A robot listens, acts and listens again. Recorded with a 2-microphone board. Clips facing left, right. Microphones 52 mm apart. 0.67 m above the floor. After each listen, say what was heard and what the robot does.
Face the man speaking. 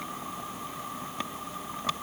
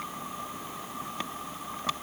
Keep listening.
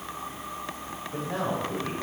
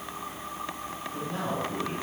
The man speaking: about 65° left or 115° left. Turn 65° left.
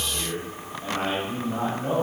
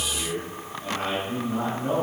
So it is at 30° left. Turn 30° left.
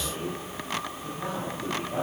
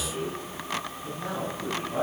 The man speaking is now 25° left. Turn 25° left.
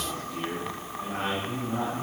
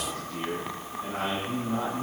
The man speaking is now 20° left. Turn 20° left.
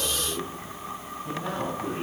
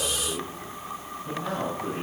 The man speaking is now 10° left. Turn 10° left.
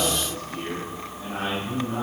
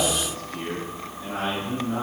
Found it: a man speaking, straight ahead.